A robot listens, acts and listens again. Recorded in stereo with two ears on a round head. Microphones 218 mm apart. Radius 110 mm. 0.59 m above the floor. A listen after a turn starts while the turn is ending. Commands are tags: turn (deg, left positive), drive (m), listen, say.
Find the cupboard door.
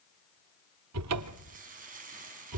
<turn deg="-70"/>
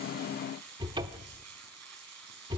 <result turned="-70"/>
<turn deg="-20"/>
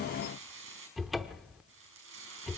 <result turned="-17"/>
<say>Facing the cupboard door, under 1 m away.</say>